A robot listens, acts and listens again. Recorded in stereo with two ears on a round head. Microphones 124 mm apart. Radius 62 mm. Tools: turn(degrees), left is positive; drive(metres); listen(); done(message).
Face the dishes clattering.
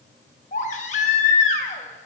listen()
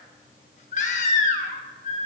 listen()
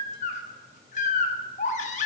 done("I can't make out dishes clattering, only a baby crying.")